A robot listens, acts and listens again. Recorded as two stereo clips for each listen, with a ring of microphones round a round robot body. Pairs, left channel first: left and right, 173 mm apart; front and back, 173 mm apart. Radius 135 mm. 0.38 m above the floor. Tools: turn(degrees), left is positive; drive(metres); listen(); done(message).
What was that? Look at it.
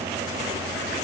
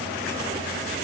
listen()
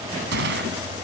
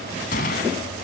turn(degrees=-50)
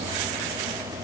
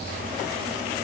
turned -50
done("Facing where the gunshot came from. I can't hear it now.")